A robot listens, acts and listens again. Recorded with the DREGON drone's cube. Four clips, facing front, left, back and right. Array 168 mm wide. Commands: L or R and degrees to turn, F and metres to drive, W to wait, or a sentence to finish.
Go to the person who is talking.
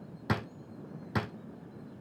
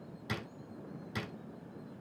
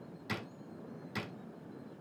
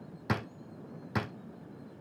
W
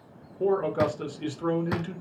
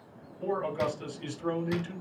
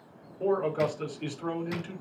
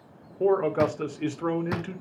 R75
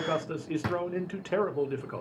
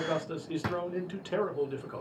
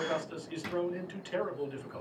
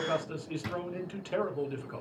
L15
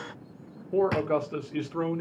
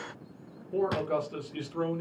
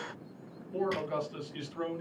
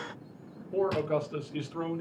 F1.0
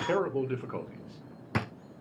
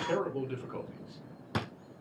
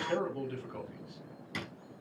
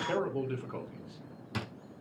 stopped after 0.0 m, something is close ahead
Something is in my way. I am facing the man speaking but have not reached it.